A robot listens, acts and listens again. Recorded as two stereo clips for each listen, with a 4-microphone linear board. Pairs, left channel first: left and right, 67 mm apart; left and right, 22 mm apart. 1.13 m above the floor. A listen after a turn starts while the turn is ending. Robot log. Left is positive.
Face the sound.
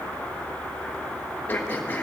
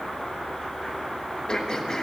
note: The throat clearing: about 25° left or 155° left.
cmd yaw +25
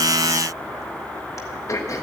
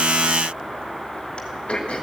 note: So it is at 130° left.
cmd yaw +130
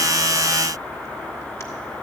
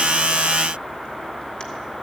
cmd idle
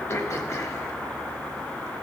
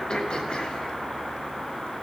note: The throat clearing is now 45° left.
cmd yaw +45
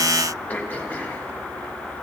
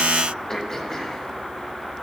note: The throat clearing is now 25° left.
cmd yaw +25
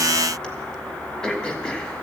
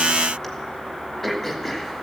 note: The throat clearing is now 15° left.
cmd yaw +15
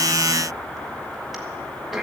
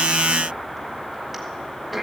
end: Found it: throat clearing, straight ahead, 1 to 2 m away.